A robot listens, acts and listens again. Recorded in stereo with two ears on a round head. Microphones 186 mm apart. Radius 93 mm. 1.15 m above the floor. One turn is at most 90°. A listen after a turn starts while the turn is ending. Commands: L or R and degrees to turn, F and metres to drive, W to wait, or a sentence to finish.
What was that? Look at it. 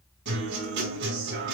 R55
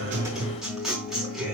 Facing the guitar, over 4 m away.